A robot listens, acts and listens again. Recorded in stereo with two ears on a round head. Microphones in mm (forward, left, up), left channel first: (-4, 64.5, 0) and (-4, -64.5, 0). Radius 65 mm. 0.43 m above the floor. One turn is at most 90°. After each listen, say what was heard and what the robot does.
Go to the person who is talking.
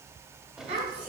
The child speaking: about 50° right or 130° right. Turn 50° right.
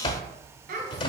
So it is at 80° right. Turn 80° right.
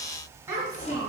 The child speaking is now 20° right. Turn 20° right.
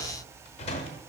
Keep listening.
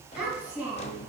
The child speaking is now 10° right. Turn 10° right.
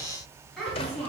Drive 1.0 m forward.
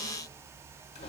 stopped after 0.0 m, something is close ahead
Keep listening.
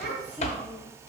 The child speaking is now 10° right. Turn 10° right.
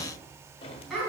Something is in my way. I am facing the child speaking but have not reached it.